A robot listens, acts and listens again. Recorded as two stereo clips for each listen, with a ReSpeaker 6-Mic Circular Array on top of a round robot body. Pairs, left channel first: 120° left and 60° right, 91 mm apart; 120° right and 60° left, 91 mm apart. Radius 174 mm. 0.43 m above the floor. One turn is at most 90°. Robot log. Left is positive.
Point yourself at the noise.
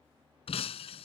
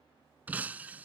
note: The breaking glass: 135° left.
cmd yaw +90
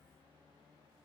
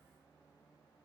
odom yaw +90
note: Nothing new. It was at 45° left.
cmd yaw +45
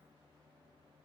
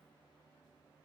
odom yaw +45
end: Facing where the breaking glass came from. I can't hear it now.